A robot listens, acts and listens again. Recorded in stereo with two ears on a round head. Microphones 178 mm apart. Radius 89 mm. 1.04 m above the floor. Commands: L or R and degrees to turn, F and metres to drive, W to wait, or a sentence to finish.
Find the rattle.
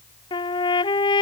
W
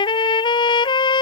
W
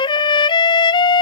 I can't make out a rattle to turn to.